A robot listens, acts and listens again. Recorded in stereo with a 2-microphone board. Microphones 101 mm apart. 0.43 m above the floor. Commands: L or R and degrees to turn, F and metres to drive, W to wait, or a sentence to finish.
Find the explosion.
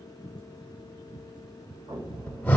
R45
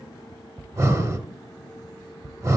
W
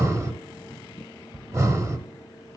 I heard an explosion, but can't make it out now. It was about straight ahead or 90° right.